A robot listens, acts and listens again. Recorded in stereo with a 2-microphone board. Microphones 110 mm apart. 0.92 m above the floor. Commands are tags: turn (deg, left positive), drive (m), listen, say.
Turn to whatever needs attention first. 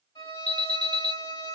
<turn deg="90"/>
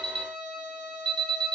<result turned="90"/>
<say>Found it: an alarm, straight ahead.</say>